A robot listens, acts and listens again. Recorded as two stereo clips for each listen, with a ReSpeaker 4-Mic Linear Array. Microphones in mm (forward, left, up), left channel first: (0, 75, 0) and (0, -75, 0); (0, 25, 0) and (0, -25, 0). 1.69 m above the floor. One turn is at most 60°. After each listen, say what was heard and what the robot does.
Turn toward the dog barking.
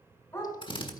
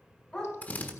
The dog barking: about 20° left or 160° left. Turn 20° left.
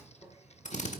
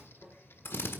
Keep listening.
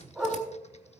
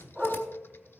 Found it: a dog barking, straight ahead, over 4 m away.